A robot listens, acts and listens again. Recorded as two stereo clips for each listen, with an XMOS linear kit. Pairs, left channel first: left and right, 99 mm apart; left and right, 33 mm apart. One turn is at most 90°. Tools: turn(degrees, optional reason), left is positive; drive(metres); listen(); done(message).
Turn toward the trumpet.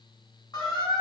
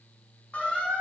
listen()
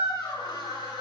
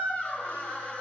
listen()
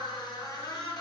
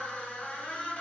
done("I can't make out a trumpet, only a squeak.")